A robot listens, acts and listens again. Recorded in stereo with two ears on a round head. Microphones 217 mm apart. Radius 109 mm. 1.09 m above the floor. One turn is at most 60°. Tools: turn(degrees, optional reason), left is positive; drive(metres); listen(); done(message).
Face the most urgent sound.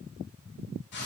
listen()
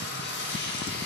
listen()
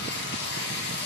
done("I can't make out anything urgent, only frying.")